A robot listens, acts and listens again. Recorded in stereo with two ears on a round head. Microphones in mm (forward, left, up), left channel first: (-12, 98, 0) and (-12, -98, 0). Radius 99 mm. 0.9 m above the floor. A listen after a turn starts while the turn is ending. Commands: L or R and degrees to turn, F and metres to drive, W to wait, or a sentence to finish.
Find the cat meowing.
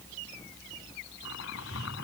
L60
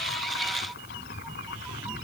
Facing the cat meowing.